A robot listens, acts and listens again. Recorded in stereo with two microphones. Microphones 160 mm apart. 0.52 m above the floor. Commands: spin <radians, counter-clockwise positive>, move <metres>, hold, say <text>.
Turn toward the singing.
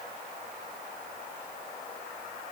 hold
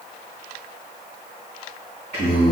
spin 0.79
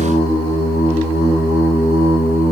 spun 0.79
spin 1.66
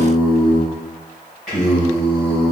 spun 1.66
say Facing the singing.